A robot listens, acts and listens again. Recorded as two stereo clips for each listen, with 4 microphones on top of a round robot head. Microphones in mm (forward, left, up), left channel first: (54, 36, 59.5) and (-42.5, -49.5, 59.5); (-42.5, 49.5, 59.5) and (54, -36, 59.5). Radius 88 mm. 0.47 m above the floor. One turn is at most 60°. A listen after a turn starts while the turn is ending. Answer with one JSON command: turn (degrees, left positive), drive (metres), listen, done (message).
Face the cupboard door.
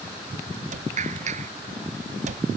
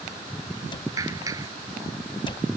{"turn": -60}
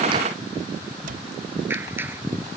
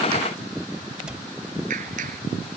{"turn": -60}
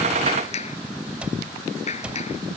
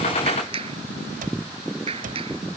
{"turn": -55}
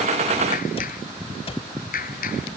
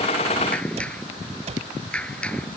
{"done": "Facing the cupboard door."}